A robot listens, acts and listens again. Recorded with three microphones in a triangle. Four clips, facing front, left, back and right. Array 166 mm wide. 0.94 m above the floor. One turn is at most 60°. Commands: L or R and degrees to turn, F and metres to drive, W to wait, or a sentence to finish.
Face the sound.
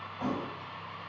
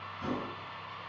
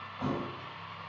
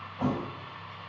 R60
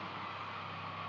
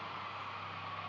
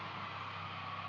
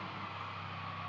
R20
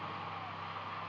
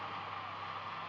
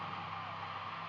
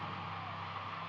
I heard a thud from this way, but can't make it out now.